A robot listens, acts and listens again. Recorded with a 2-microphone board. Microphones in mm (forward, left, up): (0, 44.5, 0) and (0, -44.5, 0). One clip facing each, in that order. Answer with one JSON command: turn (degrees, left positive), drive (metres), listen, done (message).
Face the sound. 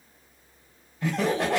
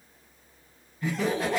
{"turn": 90}
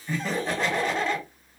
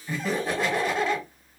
{"done": "Facing the laughter."}